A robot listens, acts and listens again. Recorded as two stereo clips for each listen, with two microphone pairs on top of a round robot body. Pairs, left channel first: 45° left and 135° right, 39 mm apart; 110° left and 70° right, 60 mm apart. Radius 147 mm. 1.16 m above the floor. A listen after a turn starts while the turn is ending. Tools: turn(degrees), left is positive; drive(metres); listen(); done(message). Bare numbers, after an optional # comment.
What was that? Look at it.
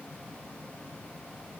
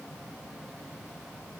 listen()
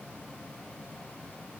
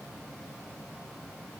listen()
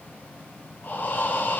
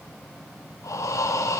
# The breathing: 85° left.
turn(85)
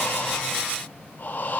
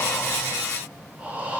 done("Facing the breathing.")